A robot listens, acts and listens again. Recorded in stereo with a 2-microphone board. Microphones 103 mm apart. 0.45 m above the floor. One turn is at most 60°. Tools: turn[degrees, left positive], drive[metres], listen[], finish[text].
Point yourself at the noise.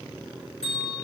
Action: turn[60]
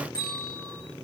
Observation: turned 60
Thought: So it is at 40° left.
Action: turn[40]
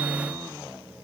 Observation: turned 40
Action: listen[]
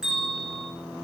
Action: finish[Found it: a bell, straight ahead, over 4 m away.]